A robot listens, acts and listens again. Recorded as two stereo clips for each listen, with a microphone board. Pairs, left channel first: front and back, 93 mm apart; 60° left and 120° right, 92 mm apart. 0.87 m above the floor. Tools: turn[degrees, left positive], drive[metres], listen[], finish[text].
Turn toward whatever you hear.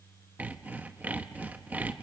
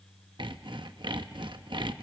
Thought: The sawing: 110° right.
Action: turn[-110]
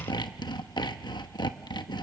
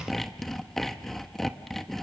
Thought: The sawing is now 25° right.
Action: turn[-25]
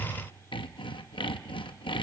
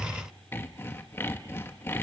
Action: finish[Facing the sawing.]